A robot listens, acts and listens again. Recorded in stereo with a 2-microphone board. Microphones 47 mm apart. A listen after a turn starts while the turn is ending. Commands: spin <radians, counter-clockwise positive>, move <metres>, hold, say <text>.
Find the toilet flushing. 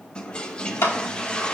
spin 0.35
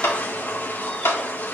spin 2.44
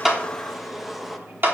say Facing the toilet flushing.